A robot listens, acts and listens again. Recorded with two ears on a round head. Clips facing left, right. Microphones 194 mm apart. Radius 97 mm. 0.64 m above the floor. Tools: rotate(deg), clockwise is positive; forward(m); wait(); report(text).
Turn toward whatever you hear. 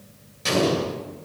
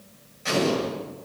rotate(-50)
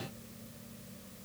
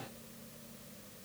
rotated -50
wait()
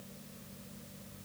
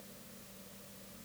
report("I heard an explosion, but can't make it out now. It was about straight ahead or 80° left.")